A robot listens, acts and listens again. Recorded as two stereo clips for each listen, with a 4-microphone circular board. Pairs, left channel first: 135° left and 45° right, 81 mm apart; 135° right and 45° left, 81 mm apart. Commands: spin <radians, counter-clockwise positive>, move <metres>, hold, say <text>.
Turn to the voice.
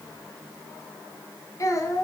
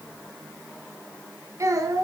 spin 1.48
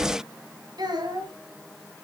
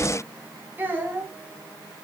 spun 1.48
spin -0.44
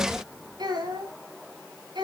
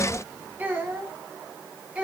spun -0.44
spin -0.52
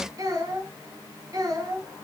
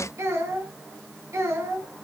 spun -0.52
say Found it: a child speaking, straight ahead, 2 to 4 m away.